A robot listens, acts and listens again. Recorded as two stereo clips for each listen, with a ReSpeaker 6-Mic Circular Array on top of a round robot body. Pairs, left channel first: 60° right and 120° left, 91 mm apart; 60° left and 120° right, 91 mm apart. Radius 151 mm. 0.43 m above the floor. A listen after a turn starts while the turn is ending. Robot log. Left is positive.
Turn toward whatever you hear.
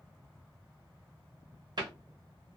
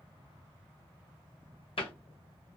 note: The cupboard door: 80° left.
cmd yaw +80
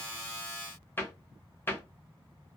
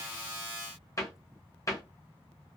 end: Found it: a cupboard door, straight ahead.